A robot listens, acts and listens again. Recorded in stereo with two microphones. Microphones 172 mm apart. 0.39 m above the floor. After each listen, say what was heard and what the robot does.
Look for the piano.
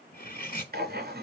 Keep listening.
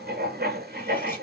Keep listening.
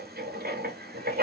I can't make out a piano, only writing and cutlery clinking.